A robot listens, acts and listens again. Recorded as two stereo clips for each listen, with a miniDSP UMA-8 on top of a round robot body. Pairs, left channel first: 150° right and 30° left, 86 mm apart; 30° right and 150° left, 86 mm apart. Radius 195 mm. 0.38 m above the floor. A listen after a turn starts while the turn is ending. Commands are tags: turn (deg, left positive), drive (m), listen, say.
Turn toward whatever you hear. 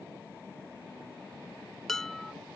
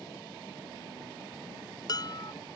<turn deg="-65"/>
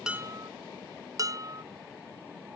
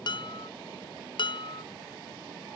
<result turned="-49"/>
<turn deg="-15"/>
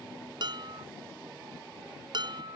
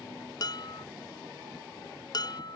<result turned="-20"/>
<say>Facing the dishes clattering.</say>